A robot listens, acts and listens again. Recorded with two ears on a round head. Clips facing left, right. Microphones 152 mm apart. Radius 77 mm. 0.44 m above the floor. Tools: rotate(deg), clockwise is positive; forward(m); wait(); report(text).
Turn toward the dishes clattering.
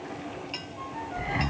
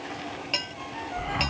rotate(65)
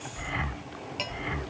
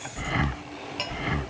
report("Found it: dishes clattering, straight ahead.")